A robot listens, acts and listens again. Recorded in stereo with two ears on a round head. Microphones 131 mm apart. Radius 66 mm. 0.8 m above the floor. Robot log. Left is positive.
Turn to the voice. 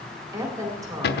note: The woman speaking: about 25° right or 155° right.
cmd yaw -25
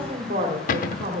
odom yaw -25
note: So it is at 130° right.
cmd yaw -130
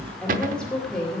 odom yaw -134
end: Facing the woman speaking, 2 to 4 m away.